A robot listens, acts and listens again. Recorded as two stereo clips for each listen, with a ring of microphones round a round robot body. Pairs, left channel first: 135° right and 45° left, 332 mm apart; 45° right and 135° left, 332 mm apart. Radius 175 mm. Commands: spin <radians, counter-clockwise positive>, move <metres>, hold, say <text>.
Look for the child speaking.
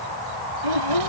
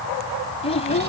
spin 0.44
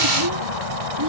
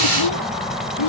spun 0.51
say Facing the child speaking.